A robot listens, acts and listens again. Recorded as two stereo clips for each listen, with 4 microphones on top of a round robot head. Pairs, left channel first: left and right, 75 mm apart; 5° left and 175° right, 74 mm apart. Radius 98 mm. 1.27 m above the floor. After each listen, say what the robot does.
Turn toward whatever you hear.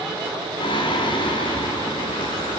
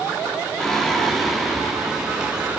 Turn 100° left.
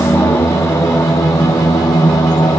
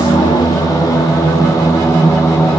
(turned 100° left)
Turn 60° left.
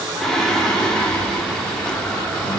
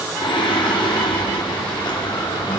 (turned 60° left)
Turn 10° left.
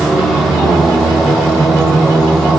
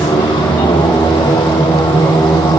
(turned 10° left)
Facing the singing.